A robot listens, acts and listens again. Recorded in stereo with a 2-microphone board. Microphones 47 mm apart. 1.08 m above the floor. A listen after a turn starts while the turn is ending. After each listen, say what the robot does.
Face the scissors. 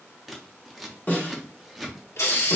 Turn 30° left.
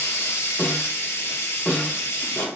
Keep listening.
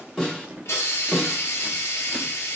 Turn 30° right.
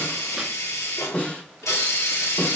Keep listening.
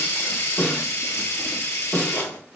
Keep listening.
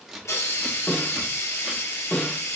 Turn 10° right.
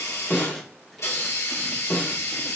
Keep listening.
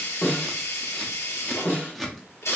Facing the scissors, under 1 m away.